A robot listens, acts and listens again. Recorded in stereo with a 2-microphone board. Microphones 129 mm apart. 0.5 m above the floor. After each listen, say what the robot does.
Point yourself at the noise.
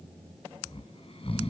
Turn 50° left.
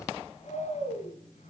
Turn 75° left.
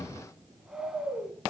Found it: snoring, straight ahead, 2 to 4 m away.